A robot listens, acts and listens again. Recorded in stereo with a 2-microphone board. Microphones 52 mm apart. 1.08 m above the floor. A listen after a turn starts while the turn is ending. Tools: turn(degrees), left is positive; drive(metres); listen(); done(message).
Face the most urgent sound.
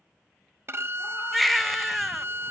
turn(degrees=30)
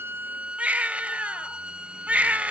turn(degrees=-30)
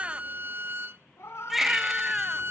done("Found it: a baby crying, straight ahead.")